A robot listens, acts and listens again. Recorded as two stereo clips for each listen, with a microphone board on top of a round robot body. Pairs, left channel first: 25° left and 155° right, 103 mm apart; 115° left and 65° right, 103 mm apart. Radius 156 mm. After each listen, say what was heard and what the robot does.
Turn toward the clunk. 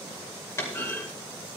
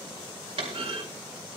The clunk: 40° right. Turn 40° right.
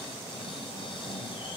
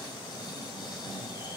I heard a clunk from this way, but can't make it out now.